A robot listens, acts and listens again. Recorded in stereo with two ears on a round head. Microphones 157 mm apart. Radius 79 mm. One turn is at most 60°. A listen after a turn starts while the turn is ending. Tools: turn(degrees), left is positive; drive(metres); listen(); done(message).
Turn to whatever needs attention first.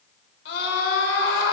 turn(degrees=60)
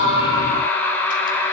turn(degrees=15)
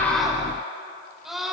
done("Found it: a scream, straight ahead.")